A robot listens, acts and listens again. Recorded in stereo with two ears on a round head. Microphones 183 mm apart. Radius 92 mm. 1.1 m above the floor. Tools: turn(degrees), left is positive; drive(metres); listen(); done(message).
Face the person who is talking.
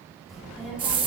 turn(degrees=-30)
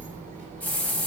turn(degrees=-135)
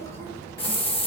turn(degrees=15)
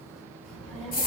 done("Found it: a child speaking, straight ahead, over 4 m away.")